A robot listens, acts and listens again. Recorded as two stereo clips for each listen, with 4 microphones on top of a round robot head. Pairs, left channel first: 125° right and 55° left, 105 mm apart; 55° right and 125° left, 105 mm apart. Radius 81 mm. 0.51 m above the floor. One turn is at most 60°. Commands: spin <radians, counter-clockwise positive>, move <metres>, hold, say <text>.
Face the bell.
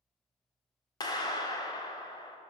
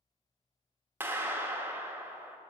hold
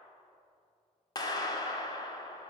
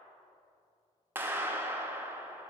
hold
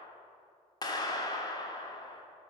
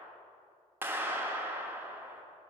say I can't make out a bell, only a clap.